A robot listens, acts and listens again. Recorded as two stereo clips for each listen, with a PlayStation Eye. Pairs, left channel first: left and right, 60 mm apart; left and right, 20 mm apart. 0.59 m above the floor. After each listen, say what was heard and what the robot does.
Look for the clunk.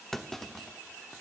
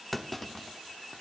Turn 30° left.
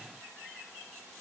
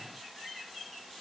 Keep listening.
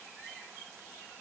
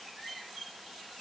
I heard a clunk, but can't make it out now. It was about 25° right or 145° left.